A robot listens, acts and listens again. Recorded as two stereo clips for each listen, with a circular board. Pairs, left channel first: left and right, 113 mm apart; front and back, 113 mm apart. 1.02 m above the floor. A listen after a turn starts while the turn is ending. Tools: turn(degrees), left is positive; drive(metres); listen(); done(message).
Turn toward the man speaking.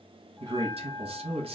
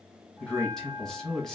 turn(degrees=-85)
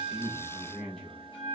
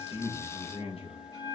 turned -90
done("Found it: a man speaking, straight ahead.")